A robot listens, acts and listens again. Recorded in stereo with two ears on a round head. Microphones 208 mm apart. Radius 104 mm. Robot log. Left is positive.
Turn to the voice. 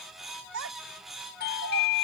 note: The child speaking: about 65° right or 115° right.
cmd yaw -65
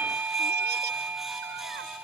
cmd idle
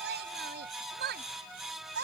note: So it is at 50° right.
cmd yaw -50
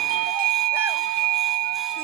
cmd idle
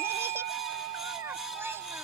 note: The child speaking is now 10° right.
cmd yaw -10
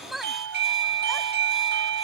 end: Found it: a child speaking, straight ahead.